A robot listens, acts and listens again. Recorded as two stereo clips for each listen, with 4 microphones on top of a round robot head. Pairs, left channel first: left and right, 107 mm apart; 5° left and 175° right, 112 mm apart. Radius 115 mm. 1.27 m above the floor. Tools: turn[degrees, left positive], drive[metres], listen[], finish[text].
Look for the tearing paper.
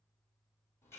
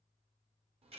Action: listen[]
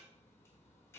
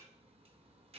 Action: listen[]
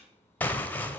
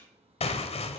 Thought: The tearing paper: 15° left.
Action: turn[15]
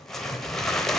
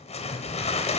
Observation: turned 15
Action: finish[Found it: tearing paper, straight ahead, under 1 m away.]